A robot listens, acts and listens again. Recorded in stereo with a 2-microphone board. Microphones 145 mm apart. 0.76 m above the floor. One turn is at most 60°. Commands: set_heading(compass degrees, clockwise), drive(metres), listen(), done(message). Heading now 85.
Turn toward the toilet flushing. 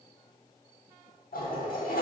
set_heading(25)
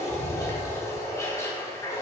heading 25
set_heading(5)
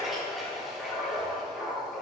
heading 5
done("Facing the toilet flushing, 1 to 2 m away.")